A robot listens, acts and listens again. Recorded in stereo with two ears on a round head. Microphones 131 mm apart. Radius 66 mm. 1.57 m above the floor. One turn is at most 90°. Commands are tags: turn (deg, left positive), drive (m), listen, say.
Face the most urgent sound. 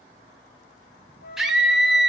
<turn deg="-30"/>
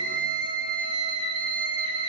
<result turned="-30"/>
<turn deg="-90"/>
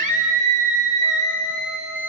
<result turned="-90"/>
<turn deg="-55"/>
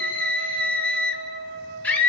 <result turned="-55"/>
<turn deg="10"/>
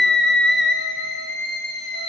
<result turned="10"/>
<say>Facing the scream.</say>